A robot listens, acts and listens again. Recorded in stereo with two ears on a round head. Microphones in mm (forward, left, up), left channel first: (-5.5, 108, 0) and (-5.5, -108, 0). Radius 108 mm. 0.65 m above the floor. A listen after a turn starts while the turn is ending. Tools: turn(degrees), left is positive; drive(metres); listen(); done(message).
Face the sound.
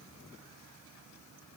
listen()
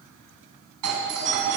turn(degrees=-90)
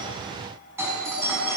turn(degrees=-10)
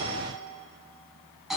done("Facing the doorbell, over 4 m away.")